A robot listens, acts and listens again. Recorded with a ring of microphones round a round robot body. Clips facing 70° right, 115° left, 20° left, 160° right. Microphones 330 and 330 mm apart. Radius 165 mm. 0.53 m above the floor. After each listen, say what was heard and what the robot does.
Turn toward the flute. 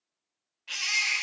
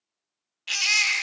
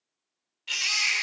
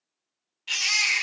Keep listening.
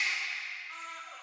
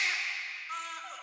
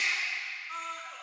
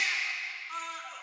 Keep listening.
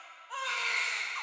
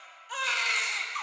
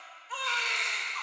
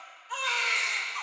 I can't make out a flute to turn to.